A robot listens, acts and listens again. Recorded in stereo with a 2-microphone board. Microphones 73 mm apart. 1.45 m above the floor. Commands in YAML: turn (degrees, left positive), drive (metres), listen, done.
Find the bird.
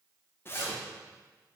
listen: true
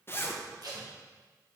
listen: true
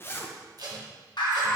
turn: 90
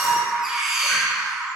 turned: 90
done: "Facing the bird, 1 to 2 m away."